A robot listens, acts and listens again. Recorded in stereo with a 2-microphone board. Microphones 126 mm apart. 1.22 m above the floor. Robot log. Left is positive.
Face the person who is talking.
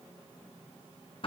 cmd idle
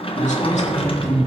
cmd yaw +90
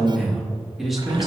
end: Facing the man speaking, 2 to 4 m away.